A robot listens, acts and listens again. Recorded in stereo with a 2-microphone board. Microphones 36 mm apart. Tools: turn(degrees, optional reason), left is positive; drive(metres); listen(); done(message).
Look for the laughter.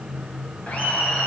turn(degrees=50, reason="The laughter: about 50° left or 130° left.")
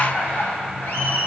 turn(degrees=80, reason="So it is at 80° left.")
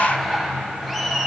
turn(degrees=10, reason="The laughter is now 10° left.")
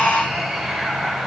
done("Found it: laughter, straight ahead.")